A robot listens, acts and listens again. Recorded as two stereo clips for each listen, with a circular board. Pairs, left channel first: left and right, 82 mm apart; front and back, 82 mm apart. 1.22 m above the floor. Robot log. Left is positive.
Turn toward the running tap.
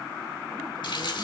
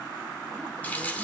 note: The running tap: 70° left.
cmd yaw +70
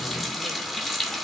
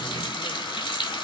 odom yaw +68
end: Facing the running tap, 2 to 4 m away.